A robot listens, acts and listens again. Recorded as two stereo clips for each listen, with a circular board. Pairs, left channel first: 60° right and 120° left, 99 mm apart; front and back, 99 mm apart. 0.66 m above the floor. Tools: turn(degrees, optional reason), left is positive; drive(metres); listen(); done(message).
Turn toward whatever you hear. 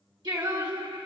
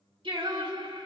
turn(degrees=150, reason="The singing: 150° left.")
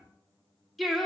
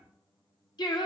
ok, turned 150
turn(degrees=25, reason="The singing is now 25° left.")
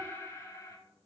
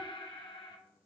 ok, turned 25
turn(degrees=-15, reason="The singing is now 15° right.")
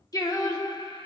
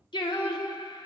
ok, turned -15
turn(degrees=-35, reason="The singing is now 35° right.")
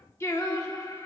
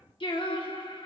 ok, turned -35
turn(degrees=-15, reason="The singing is now 15° right.")
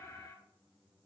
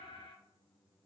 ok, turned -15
listen()
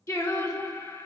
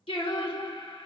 done("Found it: singing, straight ahead.")